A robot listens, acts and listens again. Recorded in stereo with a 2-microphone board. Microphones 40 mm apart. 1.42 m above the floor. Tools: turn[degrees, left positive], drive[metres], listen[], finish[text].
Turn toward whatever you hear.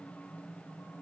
Action: listen[]
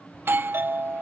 Thought: The doorbell: about 60° right or 120° right.
Action: turn[-60]
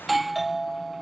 Action: finish[Facing the doorbell.]